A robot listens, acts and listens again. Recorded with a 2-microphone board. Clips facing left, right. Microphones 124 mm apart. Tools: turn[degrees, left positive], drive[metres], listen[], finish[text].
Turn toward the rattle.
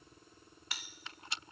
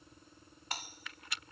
Thought: The rattle: about 25° left or 155° left.
Action: turn[25]
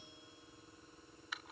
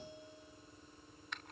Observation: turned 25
Action: finish[Found it: a rattle, straight ahead.]